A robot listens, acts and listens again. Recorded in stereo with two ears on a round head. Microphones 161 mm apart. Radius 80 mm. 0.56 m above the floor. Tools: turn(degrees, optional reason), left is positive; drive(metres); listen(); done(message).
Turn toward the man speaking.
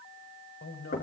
turn(degrees=70, reason="The man speaking: about 70° left or 110° left.")
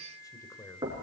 turn(degrees=20, reason="So it is at 20° left.")
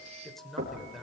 done("Facing the man speaking.")